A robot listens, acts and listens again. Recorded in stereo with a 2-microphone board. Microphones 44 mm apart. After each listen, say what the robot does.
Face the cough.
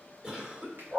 Turn 15° right.
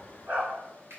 Found it: a cough, straight ahead.